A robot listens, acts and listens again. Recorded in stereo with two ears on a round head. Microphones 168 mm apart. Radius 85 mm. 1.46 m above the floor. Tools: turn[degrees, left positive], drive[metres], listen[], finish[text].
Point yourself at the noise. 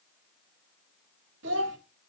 Action: turn[-90]
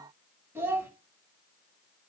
Thought: So it is at 15° right.
Action: turn[-15]
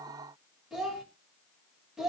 Action: finish[Facing the child speaking, 2 to 4 m away.]